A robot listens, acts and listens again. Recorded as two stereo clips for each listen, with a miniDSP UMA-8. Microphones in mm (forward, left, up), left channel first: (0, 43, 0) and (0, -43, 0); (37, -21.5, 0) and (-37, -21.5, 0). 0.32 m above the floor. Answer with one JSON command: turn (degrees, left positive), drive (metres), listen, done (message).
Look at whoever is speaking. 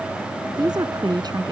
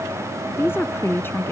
{"turn": -60}
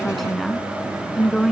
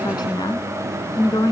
{"done": "Facing the woman speaking."}